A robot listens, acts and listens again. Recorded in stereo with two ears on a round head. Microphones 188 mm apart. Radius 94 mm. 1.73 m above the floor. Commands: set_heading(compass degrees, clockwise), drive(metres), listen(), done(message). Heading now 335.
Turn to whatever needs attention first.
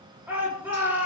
set_heading(5)
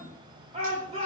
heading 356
set_heading(146)
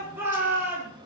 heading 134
set_heading(144)
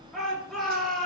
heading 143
done("Found it: a shout, straight ahead, over 4 m away.")